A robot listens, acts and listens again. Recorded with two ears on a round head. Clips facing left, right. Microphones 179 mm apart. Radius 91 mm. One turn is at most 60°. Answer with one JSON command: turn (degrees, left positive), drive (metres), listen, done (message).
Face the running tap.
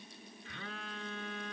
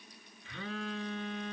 {"listen": true}
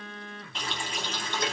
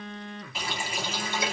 {"turn": -30}
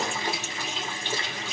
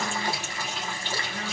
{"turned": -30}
{"turn": 20}
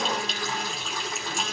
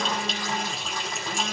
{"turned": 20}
{"done": "Facing the running tap, 1 to 2 m away."}